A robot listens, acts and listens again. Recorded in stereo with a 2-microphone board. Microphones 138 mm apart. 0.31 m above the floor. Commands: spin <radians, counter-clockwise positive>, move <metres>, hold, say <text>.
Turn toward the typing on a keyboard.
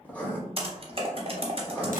spin -0.79
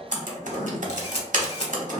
spin -1.57
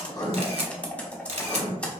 spin 0.17
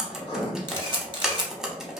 say Facing the typing on a keyboard.